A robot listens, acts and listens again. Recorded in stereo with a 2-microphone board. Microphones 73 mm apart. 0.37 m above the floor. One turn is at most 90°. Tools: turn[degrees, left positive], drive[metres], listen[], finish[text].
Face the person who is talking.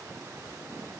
Action: listen[]
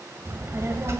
Thought: The child speaking: about 40° right or 140° right.
Action: turn[-40]
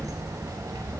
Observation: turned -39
Thought: So it is at 95° right.
Action: turn[-90]
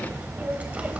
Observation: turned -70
Thought: The child speaking is now 25° right.
Action: turn[-25]
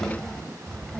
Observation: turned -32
Thought: The child speaking is now 10° left.
Action: turn[10]
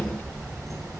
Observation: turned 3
Action: finish[Found it: a child speaking, straight ahead.]